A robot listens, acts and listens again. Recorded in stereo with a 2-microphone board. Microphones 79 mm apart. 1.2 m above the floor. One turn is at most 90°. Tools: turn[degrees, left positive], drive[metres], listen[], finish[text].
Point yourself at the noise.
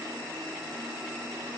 Action: listen[]
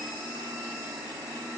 Action: listen[]
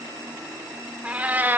Thought: The cat meowing: about 25° right or 155° right.
Action: turn[-25]
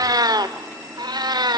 Thought: So it is at 115° right.
Action: turn[-90]
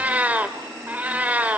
Thought: The cat meowing is now 20° right.
Action: turn[-20]
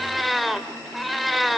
Action: finish[Facing the cat meowing.]